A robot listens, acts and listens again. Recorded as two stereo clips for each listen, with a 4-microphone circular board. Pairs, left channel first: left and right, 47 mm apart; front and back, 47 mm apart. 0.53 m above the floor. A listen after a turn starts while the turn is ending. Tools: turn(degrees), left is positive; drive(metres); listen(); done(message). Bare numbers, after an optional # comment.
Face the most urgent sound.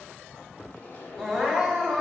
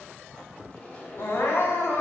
# The crying: 10° left.
turn(10)
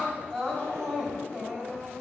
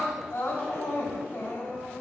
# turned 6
done("Facing the crying, 2 to 4 m away.")